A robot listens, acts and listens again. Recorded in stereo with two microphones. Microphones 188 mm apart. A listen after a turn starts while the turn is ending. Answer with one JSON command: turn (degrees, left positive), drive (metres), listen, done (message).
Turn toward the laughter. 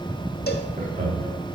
{"turn": -50}
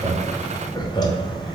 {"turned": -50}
{"turn": 30}
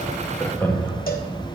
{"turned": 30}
{"turn": 15}
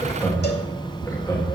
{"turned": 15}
{"turn": 20}
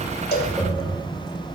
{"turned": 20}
{"done": "Facing the laughter, 2 to 4 m away."}